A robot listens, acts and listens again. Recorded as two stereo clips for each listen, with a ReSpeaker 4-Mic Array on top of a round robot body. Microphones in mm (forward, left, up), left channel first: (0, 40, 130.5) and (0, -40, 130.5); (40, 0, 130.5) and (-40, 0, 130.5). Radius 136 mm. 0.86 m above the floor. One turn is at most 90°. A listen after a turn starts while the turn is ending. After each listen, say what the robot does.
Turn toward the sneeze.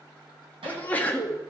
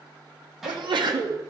Turn 90° left.
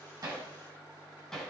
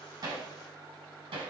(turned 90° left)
Turn 70° left.
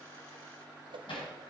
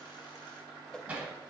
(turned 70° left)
I heard a sneeze from this way, but can't make it out now.